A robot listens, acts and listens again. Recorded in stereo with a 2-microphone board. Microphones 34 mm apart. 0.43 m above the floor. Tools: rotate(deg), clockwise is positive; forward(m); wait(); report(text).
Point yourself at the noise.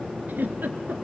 rotate(90)
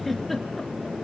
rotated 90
report("Facing the giggle, 1 to 2 m away.")